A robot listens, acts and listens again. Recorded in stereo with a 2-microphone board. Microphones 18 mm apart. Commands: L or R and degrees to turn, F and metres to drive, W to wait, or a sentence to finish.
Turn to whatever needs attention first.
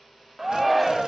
R15
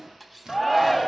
Facing the shout, 1 to 2 m away.